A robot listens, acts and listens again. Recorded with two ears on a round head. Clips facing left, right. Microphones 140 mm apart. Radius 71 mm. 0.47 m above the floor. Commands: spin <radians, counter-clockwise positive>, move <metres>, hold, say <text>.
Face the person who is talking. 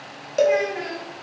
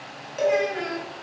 spin 0.52
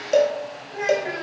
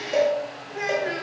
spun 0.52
spin -0.35
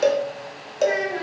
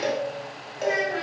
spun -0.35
say Found it: a child speaking, straight ahead.